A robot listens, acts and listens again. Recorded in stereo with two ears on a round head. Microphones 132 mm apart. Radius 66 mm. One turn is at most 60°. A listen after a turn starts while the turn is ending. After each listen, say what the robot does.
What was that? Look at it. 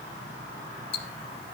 Turn 40° left.
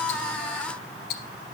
Turn 60° left.
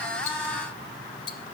Turn 35° left.
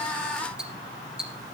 Found it: ticking, straight ahead, 1 to 2 m away.